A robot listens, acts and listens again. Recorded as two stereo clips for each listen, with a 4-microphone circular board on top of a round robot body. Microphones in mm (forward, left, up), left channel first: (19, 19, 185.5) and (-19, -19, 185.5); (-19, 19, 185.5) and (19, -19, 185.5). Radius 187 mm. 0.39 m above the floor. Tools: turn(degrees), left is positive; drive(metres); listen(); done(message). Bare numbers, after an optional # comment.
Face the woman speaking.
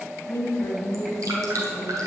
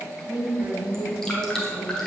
done("Facing the woman speaking.")